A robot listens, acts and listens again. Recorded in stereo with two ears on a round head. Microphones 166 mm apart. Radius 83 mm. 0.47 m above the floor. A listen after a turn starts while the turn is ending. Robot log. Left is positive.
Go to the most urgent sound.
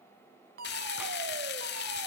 note: The fire alarm: about 50° right or 130° right.
cmd yaw -50
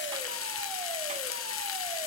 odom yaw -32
cmd idle
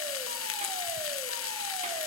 cmd idle
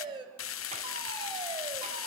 note: So it is at 30° right.
cmd yaw -30
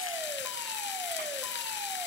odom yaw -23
cmd idle
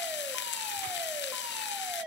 cmd fwd 1.0
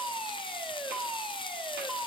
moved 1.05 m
cmd fwd 1.0
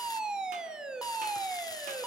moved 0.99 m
cmd fwd 1.0
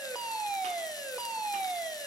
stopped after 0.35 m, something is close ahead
note: The fire alarm is now 10° right.
cmd yaw -10
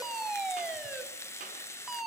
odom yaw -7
end: Arrived at the fire alarm, straight ahead.